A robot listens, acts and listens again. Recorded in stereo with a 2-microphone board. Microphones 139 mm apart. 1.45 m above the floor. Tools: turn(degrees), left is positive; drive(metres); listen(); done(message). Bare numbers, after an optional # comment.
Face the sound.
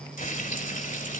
# The frying: about 75° left or 105° left.
turn(75)
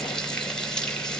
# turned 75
done("Found it: frying, straight ahead, 2 to 4 m away.")